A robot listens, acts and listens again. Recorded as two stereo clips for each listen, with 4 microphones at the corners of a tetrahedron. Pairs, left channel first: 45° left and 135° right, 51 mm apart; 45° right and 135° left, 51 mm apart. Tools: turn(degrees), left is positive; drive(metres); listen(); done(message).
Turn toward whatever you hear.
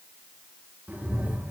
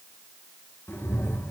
turn(degrees=-80)
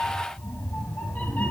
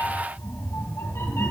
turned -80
turn(degrees=-10)
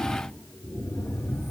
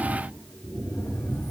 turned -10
done("Found it: a cat meowing, straight ahead.")